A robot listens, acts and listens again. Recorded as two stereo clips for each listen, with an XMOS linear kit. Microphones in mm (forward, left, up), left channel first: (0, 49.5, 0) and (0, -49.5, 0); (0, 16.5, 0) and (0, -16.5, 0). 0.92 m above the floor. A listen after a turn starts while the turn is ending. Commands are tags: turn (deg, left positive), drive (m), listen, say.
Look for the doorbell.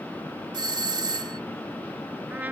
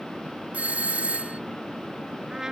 <turn deg="-50"/>
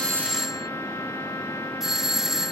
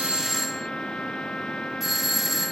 <say>Found it: a doorbell, straight ahead.</say>